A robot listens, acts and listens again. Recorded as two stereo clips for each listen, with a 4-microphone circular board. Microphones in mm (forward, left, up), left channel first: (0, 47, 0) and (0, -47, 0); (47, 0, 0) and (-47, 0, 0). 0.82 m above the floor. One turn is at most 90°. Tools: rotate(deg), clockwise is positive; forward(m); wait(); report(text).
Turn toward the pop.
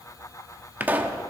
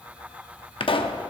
rotate(20)
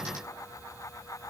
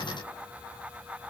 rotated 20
report("I heard a pop from this way, but can't make it out now.")